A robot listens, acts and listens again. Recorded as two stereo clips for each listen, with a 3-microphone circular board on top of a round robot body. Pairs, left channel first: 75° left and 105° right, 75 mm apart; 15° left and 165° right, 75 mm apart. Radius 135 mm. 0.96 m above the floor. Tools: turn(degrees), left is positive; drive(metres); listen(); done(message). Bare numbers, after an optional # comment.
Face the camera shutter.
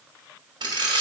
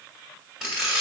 # The camera shutter: 80° right.
turn(-80)
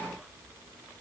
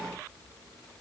listen()
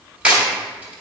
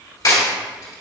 # The camera shutter is now 25° right.
turn(-25)
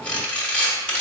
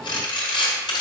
done("Found it: a camera shutter, straight ahead.")